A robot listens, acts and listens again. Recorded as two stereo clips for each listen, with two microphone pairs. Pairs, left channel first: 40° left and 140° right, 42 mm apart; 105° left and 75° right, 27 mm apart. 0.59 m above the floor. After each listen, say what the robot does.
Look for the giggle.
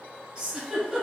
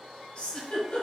Turn 150° left.
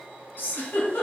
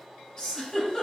Turn 55° left.
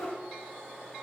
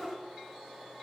Facing the giggle.